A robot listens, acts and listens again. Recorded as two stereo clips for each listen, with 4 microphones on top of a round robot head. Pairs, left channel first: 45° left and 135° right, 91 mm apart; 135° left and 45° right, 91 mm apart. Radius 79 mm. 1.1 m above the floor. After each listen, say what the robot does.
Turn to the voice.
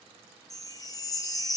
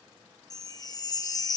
Keep listening.
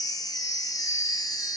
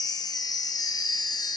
Keep listening.
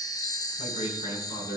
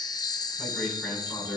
Turn 50° left.
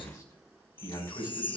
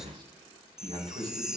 Found it: a man speaking, straight ahead, over 4 m away.